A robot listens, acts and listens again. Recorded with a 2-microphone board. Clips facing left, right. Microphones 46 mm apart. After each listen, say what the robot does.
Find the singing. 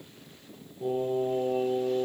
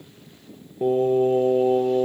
Turn 60° right.
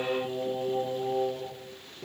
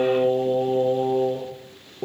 Turn 65° right.
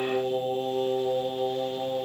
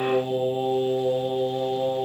Turn 10° right.
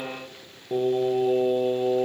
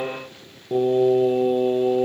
Found it: singing, straight ahead, over 4 m away.